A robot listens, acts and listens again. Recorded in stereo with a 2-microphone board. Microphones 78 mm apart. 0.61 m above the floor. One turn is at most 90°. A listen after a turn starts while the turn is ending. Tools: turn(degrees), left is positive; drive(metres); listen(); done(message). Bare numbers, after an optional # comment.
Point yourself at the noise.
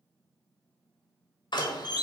# The door slam: about 65° left or 115° left.
turn(65)
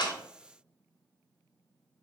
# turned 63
listen()
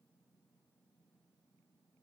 done("I heard a door slam, but can't make it out now. It was about straight ahead or 55° left.")